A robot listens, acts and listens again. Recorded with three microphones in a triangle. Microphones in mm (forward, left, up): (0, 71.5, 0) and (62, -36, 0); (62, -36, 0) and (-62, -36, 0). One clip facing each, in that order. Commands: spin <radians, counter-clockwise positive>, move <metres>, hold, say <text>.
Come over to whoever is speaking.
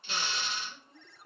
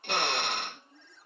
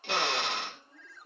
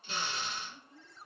spin 1.05
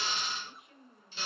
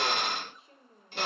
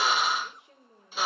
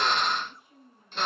move 1.0
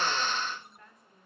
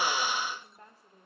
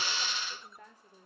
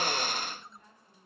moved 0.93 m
move 1.0
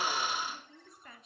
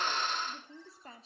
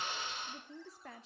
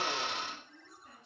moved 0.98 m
move 1.0
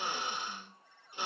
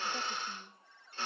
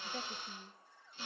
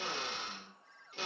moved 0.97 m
hold
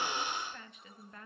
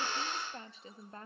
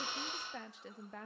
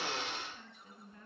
move 1.0
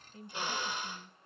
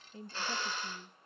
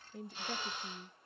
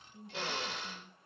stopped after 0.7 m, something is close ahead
say Arrived at the woman speaking, straight ahead.